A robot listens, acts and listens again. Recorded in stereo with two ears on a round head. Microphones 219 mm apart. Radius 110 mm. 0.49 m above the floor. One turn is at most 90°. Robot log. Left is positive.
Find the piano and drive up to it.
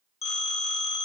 cmd idle
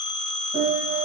note: The piano: about 35° right or 145° right.
cmd yaw -35
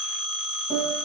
cmd fwd 1.0
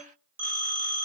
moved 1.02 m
cmd idle
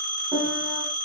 note: The piano is now 10° right.
cmd yaw -10
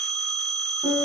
cmd fwd 1.0
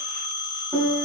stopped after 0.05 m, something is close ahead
end: I am next to the piano.